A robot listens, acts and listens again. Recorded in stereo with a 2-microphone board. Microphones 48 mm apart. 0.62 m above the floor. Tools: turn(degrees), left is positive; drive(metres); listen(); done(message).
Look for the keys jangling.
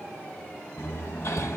listen()
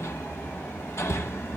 listen()
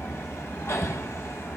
done("I can't make out keys jangling, only hammering.")